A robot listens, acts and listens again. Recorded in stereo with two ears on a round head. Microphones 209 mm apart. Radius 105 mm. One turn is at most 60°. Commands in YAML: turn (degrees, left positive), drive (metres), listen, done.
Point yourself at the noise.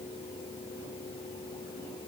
listen: true
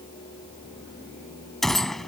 turn: 30
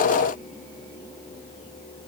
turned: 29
listen: true
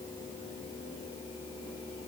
done: "I heard a gunshot, but can't make it out now. It was about 30° right or 150° left."